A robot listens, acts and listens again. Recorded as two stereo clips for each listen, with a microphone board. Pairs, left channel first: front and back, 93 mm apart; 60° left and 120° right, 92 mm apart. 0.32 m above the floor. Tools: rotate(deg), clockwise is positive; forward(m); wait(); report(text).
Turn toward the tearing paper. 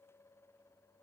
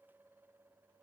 wait()
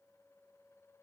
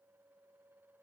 wait()
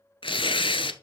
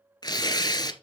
rotate(-20)
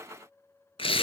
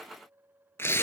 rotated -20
report("Found it: tearing paper, straight ahead, under 1 m away.")